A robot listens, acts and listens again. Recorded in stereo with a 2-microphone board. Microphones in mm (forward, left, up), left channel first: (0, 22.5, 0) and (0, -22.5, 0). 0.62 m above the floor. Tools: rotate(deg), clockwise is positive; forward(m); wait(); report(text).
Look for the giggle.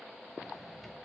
wait()
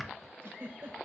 rotate(60)
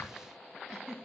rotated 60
rotate(10)
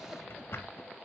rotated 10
wait()
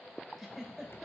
report("Facing the giggle.")